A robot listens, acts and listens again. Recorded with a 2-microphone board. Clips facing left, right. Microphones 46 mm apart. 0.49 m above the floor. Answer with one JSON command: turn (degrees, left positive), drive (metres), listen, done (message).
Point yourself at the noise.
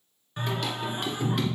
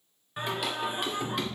{"turn": 30}
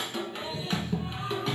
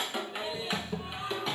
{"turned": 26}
{"turn": 30}
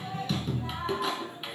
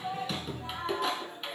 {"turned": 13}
{"turn": 30}
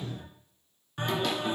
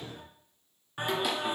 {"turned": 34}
{"turn": -10}
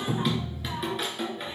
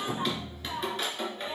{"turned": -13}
{"done": "Facing the singing."}